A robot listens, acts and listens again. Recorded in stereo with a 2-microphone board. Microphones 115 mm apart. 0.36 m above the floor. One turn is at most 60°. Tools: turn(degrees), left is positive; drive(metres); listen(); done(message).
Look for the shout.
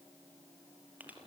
listen()
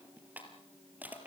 listen()
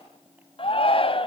turn(degrees=55)
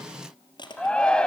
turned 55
turn(degrees=10)
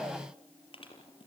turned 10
listen()
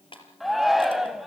done("Facing the shout, 1 to 2 m away.")